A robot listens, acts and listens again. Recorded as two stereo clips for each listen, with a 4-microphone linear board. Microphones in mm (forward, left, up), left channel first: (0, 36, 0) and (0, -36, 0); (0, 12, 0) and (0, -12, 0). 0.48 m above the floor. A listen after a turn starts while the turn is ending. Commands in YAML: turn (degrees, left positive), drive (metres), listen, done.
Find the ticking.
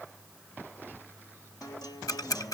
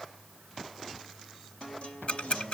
turn: 55
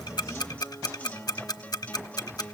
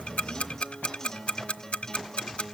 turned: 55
turn: 65
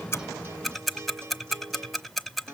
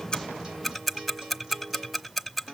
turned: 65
done: "Facing the ticking, under 1 m away."